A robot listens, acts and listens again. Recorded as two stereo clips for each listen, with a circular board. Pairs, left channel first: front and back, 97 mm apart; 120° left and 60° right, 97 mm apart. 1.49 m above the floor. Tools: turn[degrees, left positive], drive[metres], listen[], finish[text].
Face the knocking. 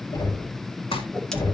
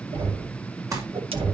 Thought: The knocking: 40° right.
Action: turn[-40]
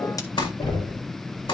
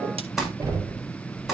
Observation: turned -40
Thought: The knocking is now 10° right.
Action: turn[-10]
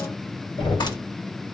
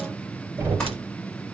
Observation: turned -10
Action: finish[Facing the knocking, 2 to 4 m away.]